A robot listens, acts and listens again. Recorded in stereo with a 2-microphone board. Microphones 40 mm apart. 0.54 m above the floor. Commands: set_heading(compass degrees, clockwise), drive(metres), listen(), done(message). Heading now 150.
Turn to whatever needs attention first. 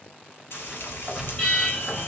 set_heading(125)
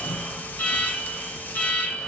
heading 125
set_heading(0)
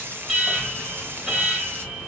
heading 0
set_heading(15)
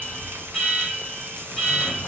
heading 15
done("Found it: an alarm, straight ahead, 1 to 2 m away.")